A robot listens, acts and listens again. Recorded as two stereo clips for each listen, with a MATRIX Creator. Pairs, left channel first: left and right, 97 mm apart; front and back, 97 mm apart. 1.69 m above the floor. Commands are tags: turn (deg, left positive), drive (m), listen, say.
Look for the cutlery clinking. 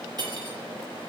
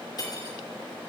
<turn deg="-45"/>
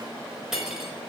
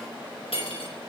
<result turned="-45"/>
<say>Facing the cutlery clinking, over 4 m away.</say>